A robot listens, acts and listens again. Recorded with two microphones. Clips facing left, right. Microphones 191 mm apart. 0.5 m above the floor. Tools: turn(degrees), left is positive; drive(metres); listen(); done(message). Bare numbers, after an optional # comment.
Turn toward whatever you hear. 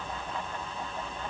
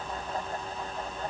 listen()
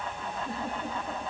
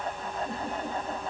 turn(30)
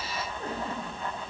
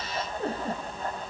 # So it is at 30° right.
turn(-30)
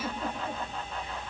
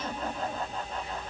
# The giggle is now 20° left.
turn(20)
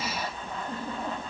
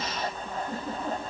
# The giggle is now 10° right.
turn(-10)
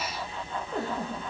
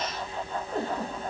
done("Found it: a giggle, straight ahead, over 4 m away.")